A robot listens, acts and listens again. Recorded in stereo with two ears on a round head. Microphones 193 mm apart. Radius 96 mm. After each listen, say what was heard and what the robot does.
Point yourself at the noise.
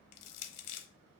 Turn 90° left.
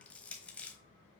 Found it: crushing, straight ahead.